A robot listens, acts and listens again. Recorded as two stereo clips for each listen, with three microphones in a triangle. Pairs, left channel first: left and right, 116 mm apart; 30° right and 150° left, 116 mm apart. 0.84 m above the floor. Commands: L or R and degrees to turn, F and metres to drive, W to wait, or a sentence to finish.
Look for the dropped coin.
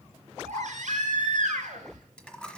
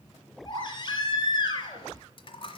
L10
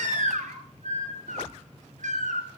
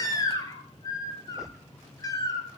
Facing where the dropped coin came from. I can't hear it now.